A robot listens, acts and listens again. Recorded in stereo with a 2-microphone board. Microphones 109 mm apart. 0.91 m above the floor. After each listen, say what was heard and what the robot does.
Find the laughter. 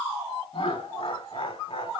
The laughter: about 60° left or 120° left. Turn 60° left.
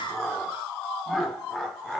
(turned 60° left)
Facing the laughter, 2 to 4 m away.